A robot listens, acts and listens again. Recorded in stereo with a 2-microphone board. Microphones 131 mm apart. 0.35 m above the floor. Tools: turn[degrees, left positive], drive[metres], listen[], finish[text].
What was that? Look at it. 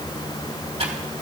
Action: listen[]
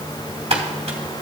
Thought: The typing on a keyboard: about 55° right or 125° right.
Action: turn[-55]
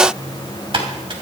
Thought: So it is at 55° right.
Action: turn[-55]
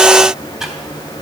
Action: listen[]
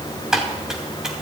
Action: finish[Found it: typing on a keyboard, straight ahead, 2 to 4 m away.]